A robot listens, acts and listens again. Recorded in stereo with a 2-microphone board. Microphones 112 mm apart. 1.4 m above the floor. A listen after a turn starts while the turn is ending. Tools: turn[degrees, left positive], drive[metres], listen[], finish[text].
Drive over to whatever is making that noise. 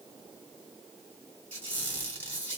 Action: turn[30]
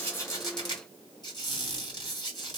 Thought: So it is at 135° left.
Action: turn[135]
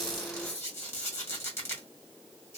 Thought: The squeak is now 25° left.
Action: turn[25]
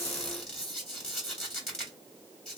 Action: drive[1.0]
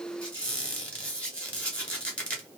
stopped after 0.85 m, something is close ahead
Thought: The squeak is now 15° left.
Action: turn[15]
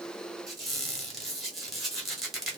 Action: finish[Arrived at the squeak, straight ahead.]